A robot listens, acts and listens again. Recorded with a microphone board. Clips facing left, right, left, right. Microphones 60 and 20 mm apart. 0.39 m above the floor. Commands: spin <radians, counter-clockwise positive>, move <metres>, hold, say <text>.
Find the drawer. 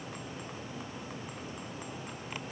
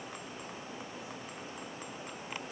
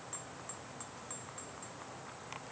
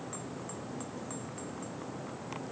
hold
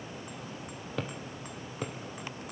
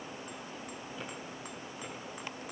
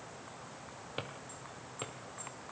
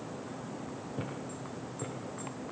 spin 1.57
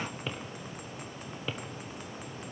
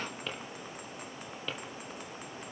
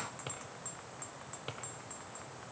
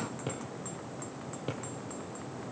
spin 0.17
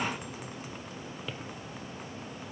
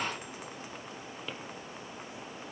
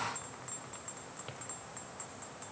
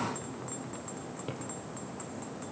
say Found it: a drawer, straight ahead, 2 to 4 m away.